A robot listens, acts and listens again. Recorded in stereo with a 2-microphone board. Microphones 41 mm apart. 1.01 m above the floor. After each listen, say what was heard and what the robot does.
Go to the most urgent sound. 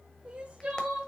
The crying: about 25° right or 155° right. Turn 25° right.
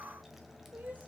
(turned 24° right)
Keep listening.
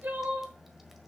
So it is at 130° right. Turn 130° right.
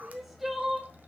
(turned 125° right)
Drive 1.0 m forward.
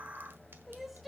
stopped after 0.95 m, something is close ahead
I am next to the crying.